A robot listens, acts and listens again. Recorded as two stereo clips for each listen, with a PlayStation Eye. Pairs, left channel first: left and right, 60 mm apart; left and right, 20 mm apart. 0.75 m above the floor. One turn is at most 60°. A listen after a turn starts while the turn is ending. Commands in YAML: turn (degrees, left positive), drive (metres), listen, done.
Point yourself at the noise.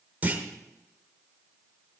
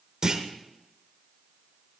turn: -30
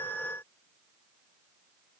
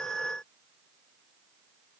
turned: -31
listen: true
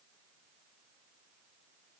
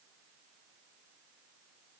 done: "I heard a clunk, but can't make it out now. It was about straight ahead or 120° right."